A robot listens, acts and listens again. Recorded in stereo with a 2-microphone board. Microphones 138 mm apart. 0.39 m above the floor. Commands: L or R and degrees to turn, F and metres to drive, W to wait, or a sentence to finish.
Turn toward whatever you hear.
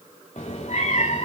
L60
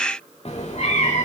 L50
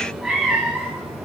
Found it: a cat meowing, straight ahead, over 4 m away.